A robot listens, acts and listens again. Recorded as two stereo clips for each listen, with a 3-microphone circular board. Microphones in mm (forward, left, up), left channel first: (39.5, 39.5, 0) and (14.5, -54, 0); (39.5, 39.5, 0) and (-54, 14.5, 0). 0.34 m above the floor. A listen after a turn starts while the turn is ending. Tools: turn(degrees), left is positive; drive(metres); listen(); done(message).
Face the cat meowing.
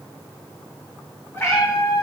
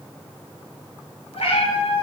done("Found it: a cat meowing, straight ahead.")